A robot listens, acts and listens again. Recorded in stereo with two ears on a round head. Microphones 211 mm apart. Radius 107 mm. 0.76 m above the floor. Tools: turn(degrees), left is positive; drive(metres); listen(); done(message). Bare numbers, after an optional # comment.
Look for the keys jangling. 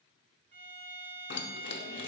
# The keys jangling: about 50° left or 130° left.
turn(50)
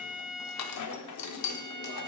# So it is at 80° left.
turn(80)
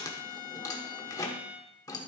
# The keys jangling is now 15° left.
turn(15)
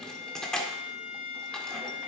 done("Found it: keys jangling, straight ahead.")